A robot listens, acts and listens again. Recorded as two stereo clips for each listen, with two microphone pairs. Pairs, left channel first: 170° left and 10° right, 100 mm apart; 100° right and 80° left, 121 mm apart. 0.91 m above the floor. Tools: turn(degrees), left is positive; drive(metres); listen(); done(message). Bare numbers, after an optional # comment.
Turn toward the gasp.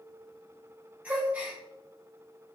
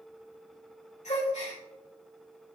# The gasp: 85° right.
turn(-85)
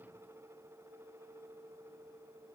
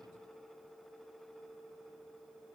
done("I heard a gasp from this way, but can't make it out now.")